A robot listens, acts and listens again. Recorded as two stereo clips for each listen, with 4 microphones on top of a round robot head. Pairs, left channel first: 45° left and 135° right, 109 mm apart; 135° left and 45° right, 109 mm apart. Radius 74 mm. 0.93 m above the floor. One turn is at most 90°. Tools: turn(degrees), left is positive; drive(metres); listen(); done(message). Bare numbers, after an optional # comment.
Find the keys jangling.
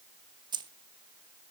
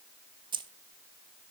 # The keys jangling: 90° right.
turn(-90)
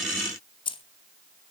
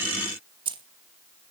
done("Found it: keys jangling, straight ahead.")